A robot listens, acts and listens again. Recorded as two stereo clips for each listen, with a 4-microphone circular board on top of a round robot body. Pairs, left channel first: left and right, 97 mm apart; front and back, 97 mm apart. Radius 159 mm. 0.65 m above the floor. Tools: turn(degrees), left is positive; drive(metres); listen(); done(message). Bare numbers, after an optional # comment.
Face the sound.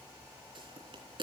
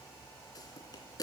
# The pop: 50° right.
turn(-50)
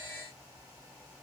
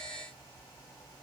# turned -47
done("I heard a pop from this way, but can't make it out now.")